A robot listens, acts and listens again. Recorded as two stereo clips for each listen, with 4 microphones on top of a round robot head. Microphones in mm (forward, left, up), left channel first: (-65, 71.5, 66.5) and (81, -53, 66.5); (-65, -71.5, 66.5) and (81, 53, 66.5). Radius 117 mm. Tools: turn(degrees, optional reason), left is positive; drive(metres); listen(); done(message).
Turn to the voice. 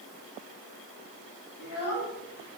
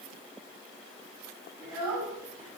turn(degrees=105, reason="The child speaking: 105° left.")
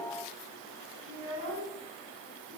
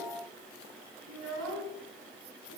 turn(degrees=15, reason="The child speaking is now 15° left.")
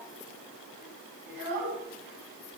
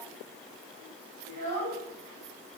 done("Found it: a child speaking, straight ahead, over 4 m away.")